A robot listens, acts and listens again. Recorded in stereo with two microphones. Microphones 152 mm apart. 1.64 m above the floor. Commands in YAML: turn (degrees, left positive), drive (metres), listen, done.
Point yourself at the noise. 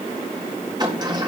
turn: -30
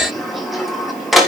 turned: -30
done: "Found it: a sliding door, straight ahead."